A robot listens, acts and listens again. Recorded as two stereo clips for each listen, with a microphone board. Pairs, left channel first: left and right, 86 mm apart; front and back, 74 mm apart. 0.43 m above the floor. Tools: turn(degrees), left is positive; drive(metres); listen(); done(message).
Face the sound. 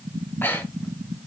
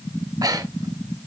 turn(degrees=155)
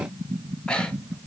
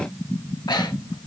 turn(degrees=10)
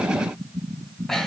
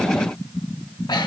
done("Found it: breathing, straight ahead, under 1 m away.")